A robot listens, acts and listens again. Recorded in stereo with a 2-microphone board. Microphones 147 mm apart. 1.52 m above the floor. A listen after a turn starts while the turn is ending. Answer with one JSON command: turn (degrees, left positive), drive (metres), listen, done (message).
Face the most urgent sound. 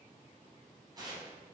{"listen": true}
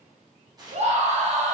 {"turn": -50}
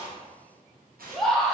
{"done": "Found it: a scream, straight ahead."}